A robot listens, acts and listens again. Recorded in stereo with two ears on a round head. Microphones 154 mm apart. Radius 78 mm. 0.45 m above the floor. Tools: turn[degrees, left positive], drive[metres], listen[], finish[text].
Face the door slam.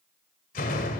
Thought: The door slam: about 50° left or 130° left.
Action: turn[50]
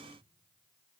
Action: listen[]
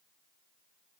Action: finish[I heard a door slam, but can't make it out now. It was about straight ahead or 80° left.]